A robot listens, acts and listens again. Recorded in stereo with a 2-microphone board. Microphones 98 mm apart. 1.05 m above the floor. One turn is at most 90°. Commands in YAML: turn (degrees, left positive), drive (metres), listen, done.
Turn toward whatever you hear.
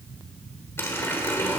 turn: 25
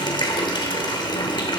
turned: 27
turn: 90
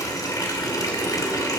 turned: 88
turn: 40
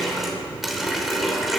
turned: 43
done: "Facing the running tap, 2 to 4 m away."